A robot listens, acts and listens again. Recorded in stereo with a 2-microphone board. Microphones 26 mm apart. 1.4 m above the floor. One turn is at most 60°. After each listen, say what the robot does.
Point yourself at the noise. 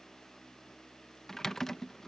Turn 15° left.
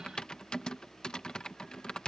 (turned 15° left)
Turn 60° left.
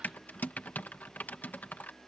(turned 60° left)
Turn 60° left.
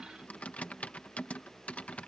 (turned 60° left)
Turn 50° left.
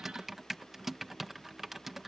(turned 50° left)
Turn 10° right.
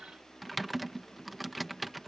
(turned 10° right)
Found it: typing on a keyboard, straight ahead.